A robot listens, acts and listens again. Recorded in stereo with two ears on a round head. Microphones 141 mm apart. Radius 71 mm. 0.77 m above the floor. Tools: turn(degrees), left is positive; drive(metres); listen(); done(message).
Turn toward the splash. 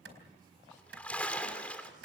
turn(degrees=30)
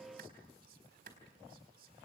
listen()
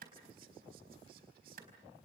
done("I heard a splash, but can't make it out now. It was about 20° right or 140° left.")